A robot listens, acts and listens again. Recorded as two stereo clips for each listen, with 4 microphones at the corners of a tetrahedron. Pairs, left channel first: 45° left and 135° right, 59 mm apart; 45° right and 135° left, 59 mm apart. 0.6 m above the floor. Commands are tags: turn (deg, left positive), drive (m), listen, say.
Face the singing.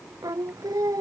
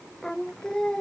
<turn deg="-125"/>
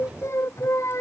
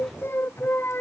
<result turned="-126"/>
<say>Found it: singing, straight ahead.</say>